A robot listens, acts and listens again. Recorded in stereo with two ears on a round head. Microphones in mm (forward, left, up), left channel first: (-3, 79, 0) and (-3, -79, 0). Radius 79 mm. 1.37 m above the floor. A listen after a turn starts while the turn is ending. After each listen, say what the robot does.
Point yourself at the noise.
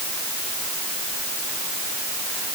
Keep listening.
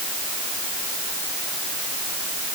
Keep listening.
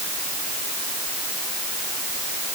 I can't make out anything to turn to.